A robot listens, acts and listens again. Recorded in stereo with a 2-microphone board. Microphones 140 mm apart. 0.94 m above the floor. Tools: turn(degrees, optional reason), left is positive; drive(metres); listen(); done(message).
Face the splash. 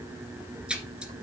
turn(degrees=-30)
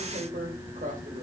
listen()
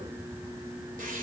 done("I heard a splash, but can't make it out now. It was about 20° left or 140° right.")